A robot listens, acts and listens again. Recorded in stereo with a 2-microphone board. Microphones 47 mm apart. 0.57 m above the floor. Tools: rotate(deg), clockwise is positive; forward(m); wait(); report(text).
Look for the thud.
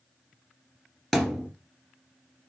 rotate(-30)
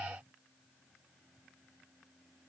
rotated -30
wait()
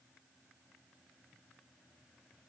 report("I heard a thud, but can't make it out now. It was about 25° right or 145° left.")